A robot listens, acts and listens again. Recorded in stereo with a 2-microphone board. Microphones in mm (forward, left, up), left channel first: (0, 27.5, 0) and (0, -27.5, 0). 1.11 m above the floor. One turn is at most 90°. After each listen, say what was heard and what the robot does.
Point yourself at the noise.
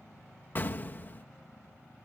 The explosion: about 35° left or 145° left. Turn 35° left.
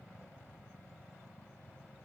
Keep listening.
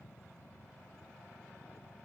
I heard an explosion, but can't make it out now. It was about straight ahead or 110° left.